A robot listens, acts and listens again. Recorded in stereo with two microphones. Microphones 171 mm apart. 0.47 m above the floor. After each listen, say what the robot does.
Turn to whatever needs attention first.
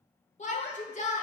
Turn 45° left.
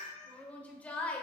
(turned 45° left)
Turn 10° left.
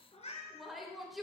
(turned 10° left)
Found it: a shout, straight ahead, 1 to 2 m away.